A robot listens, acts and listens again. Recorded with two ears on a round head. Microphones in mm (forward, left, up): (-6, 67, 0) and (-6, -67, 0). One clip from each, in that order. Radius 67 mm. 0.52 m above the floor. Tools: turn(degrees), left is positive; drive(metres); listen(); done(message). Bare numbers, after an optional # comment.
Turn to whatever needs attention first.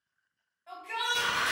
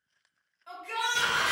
# The shout: about 60° right or 120° right.
turn(-60)
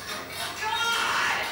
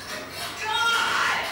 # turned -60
# So it is at 15° right.
turn(-15)
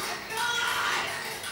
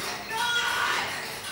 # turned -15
done("Found it: a shout, straight ahead, 1 to 2 m away.")